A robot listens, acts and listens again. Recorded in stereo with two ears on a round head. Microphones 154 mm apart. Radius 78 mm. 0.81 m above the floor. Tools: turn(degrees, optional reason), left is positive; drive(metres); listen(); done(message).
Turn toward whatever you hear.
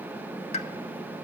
turn(degrees=35, reason="The pop: about 35° left or 145° left.")
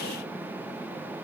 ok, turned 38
listen()
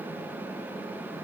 done("I heard a pop, but can't make it out now. It was about straight ahead or 105° left.")